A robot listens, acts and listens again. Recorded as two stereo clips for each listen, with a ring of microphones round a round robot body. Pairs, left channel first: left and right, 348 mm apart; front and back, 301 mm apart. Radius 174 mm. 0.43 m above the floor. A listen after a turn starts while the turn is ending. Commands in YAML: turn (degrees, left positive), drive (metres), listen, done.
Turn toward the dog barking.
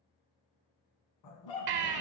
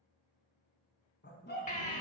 turn: 60
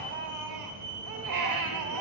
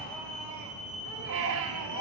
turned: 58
listen: true
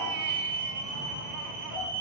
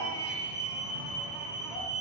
listen: true
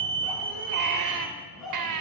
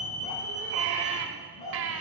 done: "Facing the dog barking, 1 to 2 m away."